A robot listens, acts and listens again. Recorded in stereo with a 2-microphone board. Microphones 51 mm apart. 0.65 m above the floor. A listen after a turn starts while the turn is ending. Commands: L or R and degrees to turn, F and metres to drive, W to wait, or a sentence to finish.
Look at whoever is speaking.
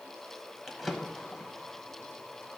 W
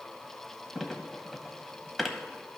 W
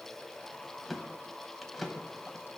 I can't make out anyone speaking to turn to.